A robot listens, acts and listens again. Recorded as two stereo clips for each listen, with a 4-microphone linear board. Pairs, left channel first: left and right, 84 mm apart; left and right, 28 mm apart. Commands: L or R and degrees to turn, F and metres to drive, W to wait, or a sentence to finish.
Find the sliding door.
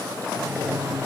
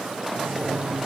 R15
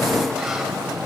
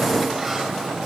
Facing the sliding door, 2 to 4 m away.